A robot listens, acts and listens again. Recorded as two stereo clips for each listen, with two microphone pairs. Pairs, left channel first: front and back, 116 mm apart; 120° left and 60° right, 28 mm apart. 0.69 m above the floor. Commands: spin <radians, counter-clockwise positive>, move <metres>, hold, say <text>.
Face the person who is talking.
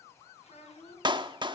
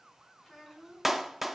spin 0.52
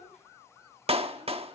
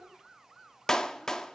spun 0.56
hold
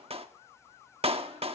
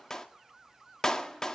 hold
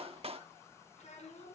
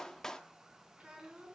say Found it: a child speaking, straight ahead, over 4 m away.